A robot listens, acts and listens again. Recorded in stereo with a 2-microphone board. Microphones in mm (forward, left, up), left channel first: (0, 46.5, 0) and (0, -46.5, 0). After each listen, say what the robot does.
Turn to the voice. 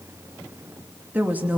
Turn 20° right.
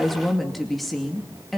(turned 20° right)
Found it: a woman speaking, straight ahead, 2 to 4 m away.